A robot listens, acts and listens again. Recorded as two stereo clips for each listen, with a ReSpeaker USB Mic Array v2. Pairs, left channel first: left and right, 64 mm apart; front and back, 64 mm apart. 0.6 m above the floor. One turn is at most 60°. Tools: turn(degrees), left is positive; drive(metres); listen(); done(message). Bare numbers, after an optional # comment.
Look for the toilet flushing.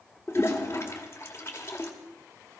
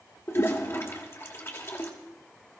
# The toilet flushing: 45° left.
turn(45)
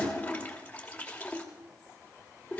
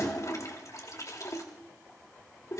# The toilet flushing is now 25° left.
turn(25)
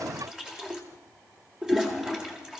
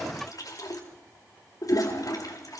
# The toilet flushing is now 10° right.
turn(-10)
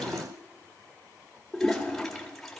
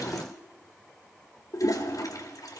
done("Found it: a toilet flushing, straight ahead.")